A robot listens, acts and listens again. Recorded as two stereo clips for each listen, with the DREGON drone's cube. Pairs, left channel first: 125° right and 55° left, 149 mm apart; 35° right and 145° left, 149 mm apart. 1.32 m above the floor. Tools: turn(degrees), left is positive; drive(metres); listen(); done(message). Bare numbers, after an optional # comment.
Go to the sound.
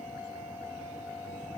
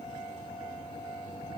listen()
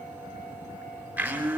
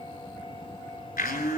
# The blender: 25° right.
turn(-25)
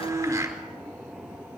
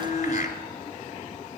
# The blender is now 15° right.
turn(-15)
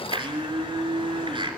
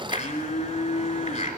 drive(1.0)
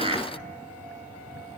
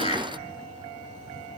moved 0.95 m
drive(1.0)
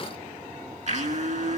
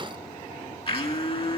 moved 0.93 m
# The blender is now 15° left.
turn(15)
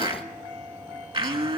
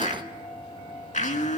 drive(1.0)
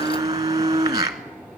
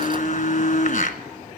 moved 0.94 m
# The blender is now 10° right.
turn(-10)
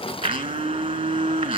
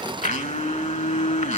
drive(1.0)
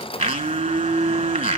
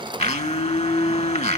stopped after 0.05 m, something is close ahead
done("I am next to the blender.")